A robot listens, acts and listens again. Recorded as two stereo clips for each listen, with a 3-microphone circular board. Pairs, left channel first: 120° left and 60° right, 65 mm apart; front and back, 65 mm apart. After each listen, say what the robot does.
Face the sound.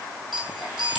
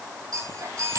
Turn 145° right.
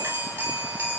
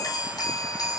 Facing the chime.